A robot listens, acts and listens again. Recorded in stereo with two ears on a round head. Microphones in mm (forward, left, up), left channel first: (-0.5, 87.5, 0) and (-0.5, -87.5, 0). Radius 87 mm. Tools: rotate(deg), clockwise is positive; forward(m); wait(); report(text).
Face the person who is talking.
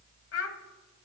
rotate(-70)
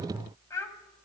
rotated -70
rotate(-15)
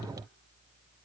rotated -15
wait()
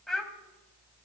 report("Facing the child speaking.")